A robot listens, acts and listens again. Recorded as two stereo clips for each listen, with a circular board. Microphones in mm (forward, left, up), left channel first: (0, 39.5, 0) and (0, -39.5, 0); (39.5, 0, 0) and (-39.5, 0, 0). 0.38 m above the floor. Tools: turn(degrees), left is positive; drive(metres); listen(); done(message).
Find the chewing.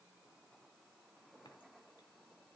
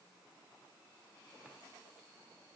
listen()
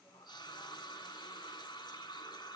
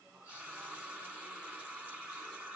listen()
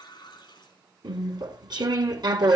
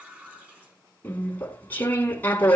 turn(degrees=-65)
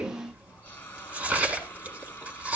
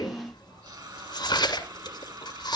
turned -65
turn(degrees=-20)
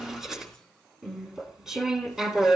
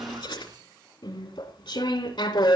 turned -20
done("Facing the chewing, 1 to 2 m away.")